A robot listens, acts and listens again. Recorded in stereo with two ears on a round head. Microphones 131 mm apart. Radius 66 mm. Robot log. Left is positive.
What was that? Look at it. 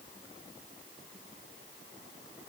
cmd idle
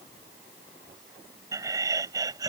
note: The laughter: about 25° right or 155° right.
cmd yaw -25
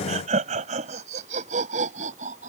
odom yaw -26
note: So it is at 125° right.
cmd yaw -125
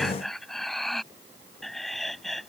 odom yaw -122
end: Found it: laughter, straight ahead.